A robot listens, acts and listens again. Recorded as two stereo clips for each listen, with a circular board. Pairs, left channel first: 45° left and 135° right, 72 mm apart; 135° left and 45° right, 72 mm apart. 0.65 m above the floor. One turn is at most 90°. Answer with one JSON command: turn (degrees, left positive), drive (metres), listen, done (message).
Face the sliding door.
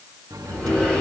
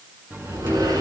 {"turn": -30}
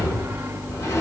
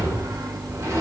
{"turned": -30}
{"done": "Facing the sliding door."}